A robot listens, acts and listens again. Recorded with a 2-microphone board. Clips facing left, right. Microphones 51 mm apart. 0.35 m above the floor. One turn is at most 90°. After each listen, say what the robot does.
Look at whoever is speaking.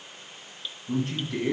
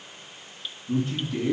Turn 70° left.
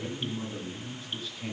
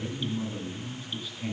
Found it: a man speaking, straight ahead.